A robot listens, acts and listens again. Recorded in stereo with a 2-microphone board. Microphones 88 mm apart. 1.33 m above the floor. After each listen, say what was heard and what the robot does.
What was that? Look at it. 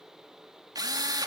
The drill: about 50° right or 130° right. Turn 50° right.
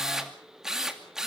Facing the drill, 2 to 4 m away.